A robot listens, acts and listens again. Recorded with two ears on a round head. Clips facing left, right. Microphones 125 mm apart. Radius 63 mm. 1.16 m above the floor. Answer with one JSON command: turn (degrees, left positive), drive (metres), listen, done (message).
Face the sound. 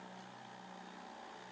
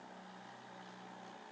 {"listen": true}
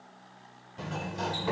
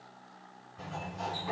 {"turn": 75}
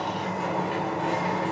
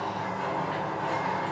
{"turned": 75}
{"turn": 25}
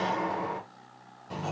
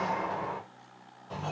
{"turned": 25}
{"turn": 10}
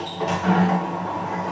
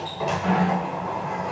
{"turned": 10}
{"done": "Found it: a sliding door, straight ahead."}